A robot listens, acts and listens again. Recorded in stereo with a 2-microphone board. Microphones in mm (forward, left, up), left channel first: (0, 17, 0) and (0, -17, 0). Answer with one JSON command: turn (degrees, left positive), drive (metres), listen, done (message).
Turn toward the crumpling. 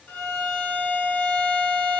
{"listen": true}
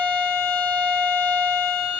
{"listen": true}
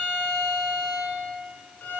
{"done": "I can't make out crumpling, only a violin."}